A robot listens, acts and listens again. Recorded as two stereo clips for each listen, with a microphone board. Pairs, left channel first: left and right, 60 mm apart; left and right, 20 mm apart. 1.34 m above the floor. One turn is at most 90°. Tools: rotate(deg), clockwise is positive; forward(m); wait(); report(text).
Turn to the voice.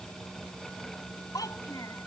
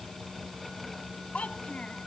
rotate(-90)
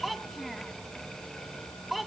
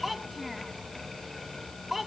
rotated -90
report("Facing the child speaking.")